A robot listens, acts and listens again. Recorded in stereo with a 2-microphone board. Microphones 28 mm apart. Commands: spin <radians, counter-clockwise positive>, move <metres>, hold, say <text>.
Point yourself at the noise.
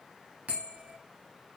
spin -1.05
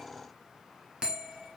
spin -0.61
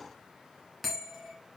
say Facing the bell.